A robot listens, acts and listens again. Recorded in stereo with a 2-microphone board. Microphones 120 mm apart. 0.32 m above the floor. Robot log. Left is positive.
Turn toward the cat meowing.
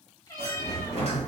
note: The cat meowing: about 30° left or 150° left.
cmd yaw +30
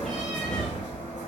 cmd idle
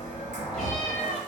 end: Facing the cat meowing.